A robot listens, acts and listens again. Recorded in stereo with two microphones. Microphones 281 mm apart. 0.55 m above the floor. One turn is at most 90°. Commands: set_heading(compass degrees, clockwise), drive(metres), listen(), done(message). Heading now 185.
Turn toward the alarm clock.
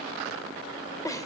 listen()
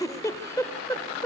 listen()
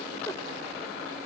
done("I can't make out an alarm clock to turn to.")